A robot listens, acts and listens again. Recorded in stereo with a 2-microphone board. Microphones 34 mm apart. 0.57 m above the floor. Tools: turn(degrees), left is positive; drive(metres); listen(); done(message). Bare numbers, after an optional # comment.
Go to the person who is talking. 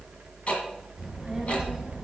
turn(-30)
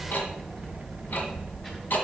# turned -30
# So it is at 20° left.
turn(20)
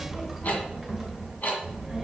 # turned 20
drive(1.0)
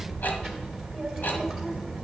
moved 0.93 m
drive(1.0)
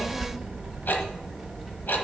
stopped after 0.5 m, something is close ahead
# The child speaking is now 15° left.
turn(15)
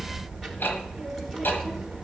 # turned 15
done("Arrived at the child speaking, straight ahead.")